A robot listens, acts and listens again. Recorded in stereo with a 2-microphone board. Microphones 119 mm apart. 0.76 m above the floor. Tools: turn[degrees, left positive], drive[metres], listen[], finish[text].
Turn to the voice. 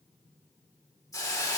Action: listen[]
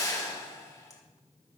Action: listen[]
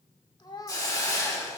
Thought: The child speaking: about 40° left or 140° left.
Action: turn[40]
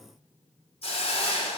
Action: listen[]
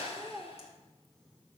Action: finish[Found it: a child speaking, straight ahead.]